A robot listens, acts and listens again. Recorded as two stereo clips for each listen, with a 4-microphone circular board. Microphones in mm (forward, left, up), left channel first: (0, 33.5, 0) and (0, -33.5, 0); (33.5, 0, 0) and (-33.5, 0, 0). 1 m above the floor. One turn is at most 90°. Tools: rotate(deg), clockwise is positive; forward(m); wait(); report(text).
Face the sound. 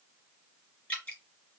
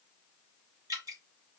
rotate(-90)
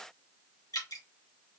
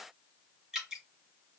rotate(-90)
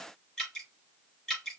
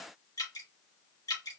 report("Found it: dripping, straight ahead, 2 to 4 m away.")